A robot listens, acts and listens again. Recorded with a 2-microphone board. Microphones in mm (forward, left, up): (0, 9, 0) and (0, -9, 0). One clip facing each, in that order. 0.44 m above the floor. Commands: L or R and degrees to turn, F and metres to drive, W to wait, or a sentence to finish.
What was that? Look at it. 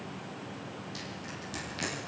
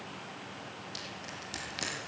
R20
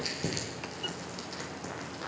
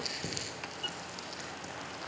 Found it: crushing, straight ahead.